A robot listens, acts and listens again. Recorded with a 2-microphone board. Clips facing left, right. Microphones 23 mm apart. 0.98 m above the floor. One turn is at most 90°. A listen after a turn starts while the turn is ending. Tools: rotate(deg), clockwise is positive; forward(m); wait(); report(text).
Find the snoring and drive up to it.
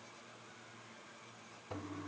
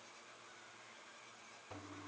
wait()
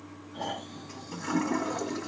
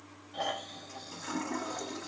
rotate(90)
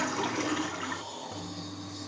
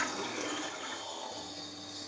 rotate(10)
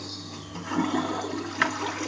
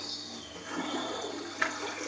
wait()
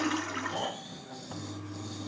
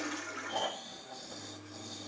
forward(1.0)
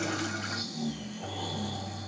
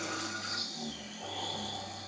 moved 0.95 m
rotate(10)
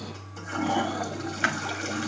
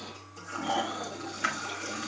forward(1.0)
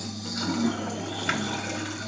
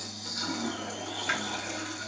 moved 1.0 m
forward(1.0)
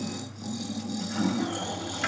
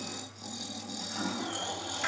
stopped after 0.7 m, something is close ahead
report("Arrived at the snoring, straight ahead.")